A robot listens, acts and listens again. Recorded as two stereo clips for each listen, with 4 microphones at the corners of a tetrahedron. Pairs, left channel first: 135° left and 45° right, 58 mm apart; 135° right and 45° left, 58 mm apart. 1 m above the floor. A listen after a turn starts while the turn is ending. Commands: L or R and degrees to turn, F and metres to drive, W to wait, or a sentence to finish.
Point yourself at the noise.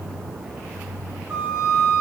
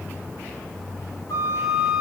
R120
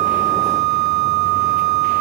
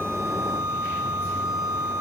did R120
R40
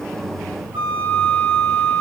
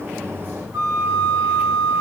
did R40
Found it: a flute, straight ahead, 2 to 4 m away.